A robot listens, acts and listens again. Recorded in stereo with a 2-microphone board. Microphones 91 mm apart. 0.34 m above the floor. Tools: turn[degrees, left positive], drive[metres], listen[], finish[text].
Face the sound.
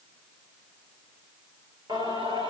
Thought: The singing: about 60° right or 120° right.
Action: turn[-60]
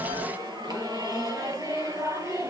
Thought: So it is at 35° right.
Action: turn[-35]
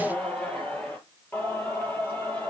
Thought: The singing is now 25° left.
Action: turn[25]
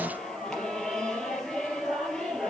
Action: finish[Found it: singing, straight ahead, 2 to 4 m away.]